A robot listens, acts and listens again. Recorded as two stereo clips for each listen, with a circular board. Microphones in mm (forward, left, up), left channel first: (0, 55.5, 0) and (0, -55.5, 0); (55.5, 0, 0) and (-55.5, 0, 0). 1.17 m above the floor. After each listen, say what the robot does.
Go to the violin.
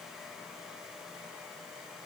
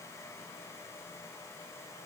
Keep listening.
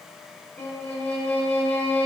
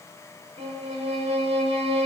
Turn 165° left.
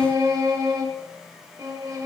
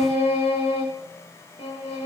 Turn 30° right.
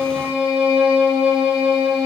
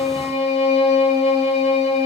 Turn 10° right.
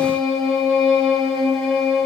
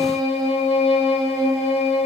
Drive 1.0 m forward.
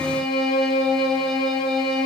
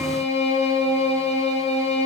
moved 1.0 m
Drive 1.0 m forward.
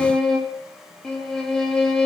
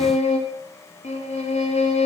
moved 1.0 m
Drive 1.0 m forward.
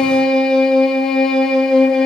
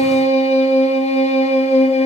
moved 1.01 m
Drive 1.0 m forward.
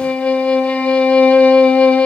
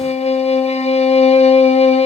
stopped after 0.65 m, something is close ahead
Turn 10° left.
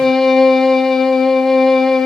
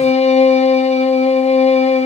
I am next to the violin.